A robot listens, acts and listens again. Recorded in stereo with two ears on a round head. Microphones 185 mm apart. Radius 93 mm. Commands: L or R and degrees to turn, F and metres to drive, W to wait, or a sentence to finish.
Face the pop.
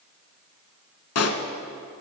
L90
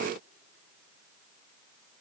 Facing where the pop came from. I can't hear it now.